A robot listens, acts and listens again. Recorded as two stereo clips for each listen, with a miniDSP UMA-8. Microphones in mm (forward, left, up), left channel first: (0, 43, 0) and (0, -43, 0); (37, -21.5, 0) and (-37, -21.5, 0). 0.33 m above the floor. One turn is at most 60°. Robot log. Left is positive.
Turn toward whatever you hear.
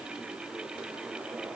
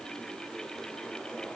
cmd idle
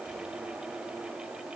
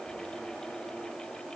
cmd idle
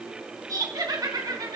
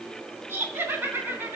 note: The laughter: 125° right.
cmd yaw -60
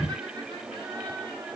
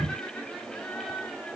note: Nothing new. It was at 65° right.
cmd yaw -60
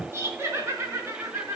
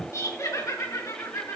note: The laughter is now 35° right.
cmd yaw -35
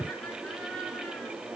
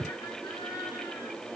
note: The laughter is now 10° left.
cmd yaw +10
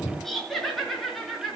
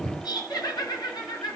end: Facing the laughter, over 4 m away.